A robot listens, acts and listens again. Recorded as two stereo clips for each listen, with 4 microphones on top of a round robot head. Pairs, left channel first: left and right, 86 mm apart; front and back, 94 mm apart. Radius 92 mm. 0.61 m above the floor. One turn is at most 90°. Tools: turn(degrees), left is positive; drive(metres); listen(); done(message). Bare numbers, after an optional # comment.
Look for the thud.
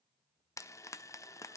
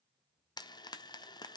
listen()
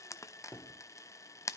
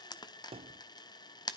# The thud: 155° left.
turn(90)
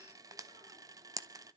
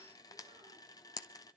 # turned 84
# Nothing new. It was at 70° left.
turn(70)
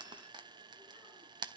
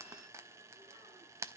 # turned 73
done("I heard a thud from this way, but can't make it out now.")